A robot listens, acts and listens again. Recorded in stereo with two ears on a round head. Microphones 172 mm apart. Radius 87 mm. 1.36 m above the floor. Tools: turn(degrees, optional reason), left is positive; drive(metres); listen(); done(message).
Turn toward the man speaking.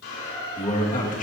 turn(degrees=40, reason="The man speaking: about 40° left or 140° left.")
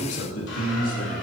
turn(degrees=95, reason="So it is at 95° left.")
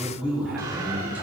turn(degrees=-10, reason="The man speaking is now 10° right.")
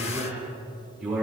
done("Facing the man speaking.")